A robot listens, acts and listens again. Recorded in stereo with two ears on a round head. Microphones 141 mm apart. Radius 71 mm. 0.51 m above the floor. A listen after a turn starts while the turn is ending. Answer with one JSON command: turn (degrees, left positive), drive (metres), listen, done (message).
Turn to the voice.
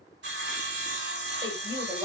{"turn": -20}
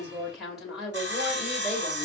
{"done": "Found it: a woman speaking, straight ahead, 2 to 4 m away."}